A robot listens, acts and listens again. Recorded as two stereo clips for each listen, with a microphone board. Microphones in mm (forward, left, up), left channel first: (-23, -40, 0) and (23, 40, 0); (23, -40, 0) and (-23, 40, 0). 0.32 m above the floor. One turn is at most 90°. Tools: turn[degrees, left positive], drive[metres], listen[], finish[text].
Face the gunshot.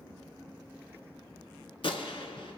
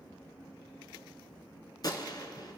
Thought: The gunshot: 105° right.
Action: turn[-90]
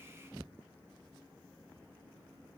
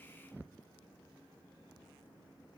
Thought: Nothing new. It was at 15° right.
Action: turn[-15]
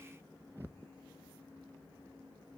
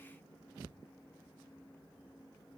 Action: finish[Facing where the gunshot came from. I can't hear it now.]